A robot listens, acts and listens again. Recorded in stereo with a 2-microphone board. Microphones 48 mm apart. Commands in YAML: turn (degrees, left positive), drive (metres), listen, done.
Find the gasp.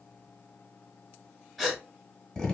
turn: 30
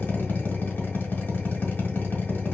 listen: true
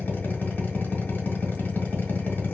done: "I heard a gasp, but can't make it out now. It was about 25° right or 145° left."